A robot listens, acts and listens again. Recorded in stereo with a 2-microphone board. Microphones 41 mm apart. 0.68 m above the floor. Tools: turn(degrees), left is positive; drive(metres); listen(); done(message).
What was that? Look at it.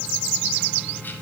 listen()
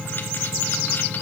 listen()
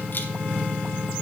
done("I can't make out anything.")